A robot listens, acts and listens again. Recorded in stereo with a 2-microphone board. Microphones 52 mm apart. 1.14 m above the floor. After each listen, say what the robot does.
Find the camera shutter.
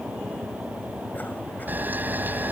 Turn 40° right.
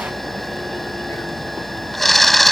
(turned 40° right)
Facing the camera shutter.